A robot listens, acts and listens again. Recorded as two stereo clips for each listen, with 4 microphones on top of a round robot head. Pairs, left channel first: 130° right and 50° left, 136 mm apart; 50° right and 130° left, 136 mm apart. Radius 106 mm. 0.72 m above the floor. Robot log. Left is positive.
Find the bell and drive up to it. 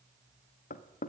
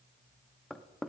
cmd idle
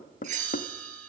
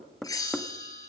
note: The bell: 15° left.
cmd yaw +15
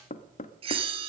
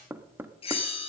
cmd fwd 1.0
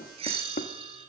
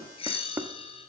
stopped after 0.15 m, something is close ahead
end: Blocked. The bell is further on, straight ahead.